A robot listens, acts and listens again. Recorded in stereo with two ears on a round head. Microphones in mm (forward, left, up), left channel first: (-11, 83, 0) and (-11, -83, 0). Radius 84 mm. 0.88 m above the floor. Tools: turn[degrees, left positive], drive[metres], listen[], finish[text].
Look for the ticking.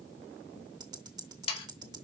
Thought: The ticking: about 20° right or 160° right.
Action: turn[-20]
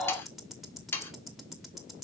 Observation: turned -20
Action: finish[Found it: ticking, straight ahead.]